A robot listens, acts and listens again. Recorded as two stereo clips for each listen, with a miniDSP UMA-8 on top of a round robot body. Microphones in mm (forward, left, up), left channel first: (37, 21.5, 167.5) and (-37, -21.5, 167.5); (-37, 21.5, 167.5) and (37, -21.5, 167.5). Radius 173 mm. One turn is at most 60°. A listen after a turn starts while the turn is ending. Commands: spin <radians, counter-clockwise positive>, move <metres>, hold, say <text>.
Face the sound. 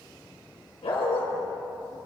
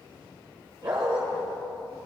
spin 0.17
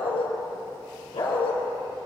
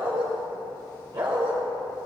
say Found it: a dog barking, straight ahead.